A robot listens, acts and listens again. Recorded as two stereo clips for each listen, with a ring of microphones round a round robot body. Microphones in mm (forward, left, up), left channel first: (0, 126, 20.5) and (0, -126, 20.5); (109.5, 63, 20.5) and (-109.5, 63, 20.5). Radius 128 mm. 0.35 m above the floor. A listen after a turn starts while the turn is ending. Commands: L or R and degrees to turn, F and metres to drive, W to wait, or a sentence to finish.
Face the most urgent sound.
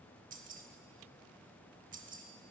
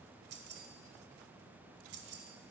W
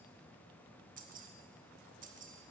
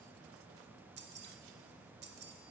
W
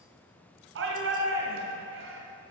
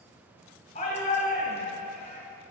R60
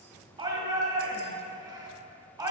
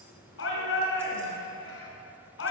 R15
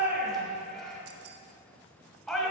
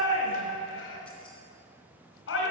Facing the shout, 2 to 4 m away.